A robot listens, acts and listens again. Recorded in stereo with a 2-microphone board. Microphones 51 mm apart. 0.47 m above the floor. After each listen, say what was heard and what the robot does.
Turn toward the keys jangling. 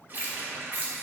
The keys jangling: about 35° right or 145° right. Turn 35° right.
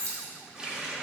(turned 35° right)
So it is at 110° right. Turn 110° right.
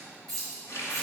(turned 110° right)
The keys jangling is now 10° left. Turn 10° left.
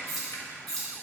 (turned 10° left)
Facing the keys jangling.